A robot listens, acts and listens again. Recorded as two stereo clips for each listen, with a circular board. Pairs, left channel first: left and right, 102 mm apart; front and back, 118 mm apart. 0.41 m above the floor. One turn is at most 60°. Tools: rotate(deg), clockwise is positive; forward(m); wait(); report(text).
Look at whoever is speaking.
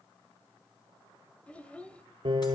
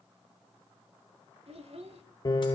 rotate(-60)
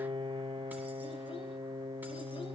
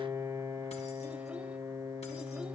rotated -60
rotate(-60)
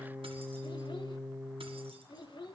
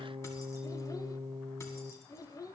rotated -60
rotate(-55)
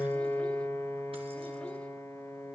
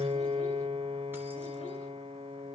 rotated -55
wait()
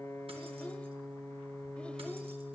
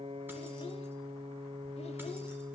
wait()
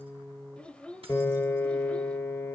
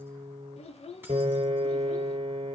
rotate(-10)
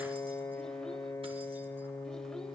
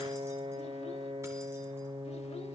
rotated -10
wait()
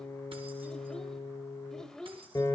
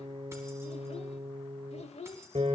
report("Found it: a child speaking, straight ahead, 1 to 2 m away.")